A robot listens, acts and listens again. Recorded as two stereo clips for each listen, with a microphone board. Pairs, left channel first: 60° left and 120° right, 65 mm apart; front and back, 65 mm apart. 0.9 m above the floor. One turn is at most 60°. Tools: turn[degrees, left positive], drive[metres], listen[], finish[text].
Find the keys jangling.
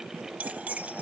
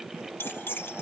Thought: The keys jangling: 50° right.
Action: turn[-50]
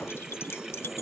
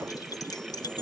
Thought: The keys jangling is now 10° left.
Action: turn[10]
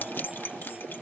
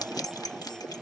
Action: finish[Facing the keys jangling.]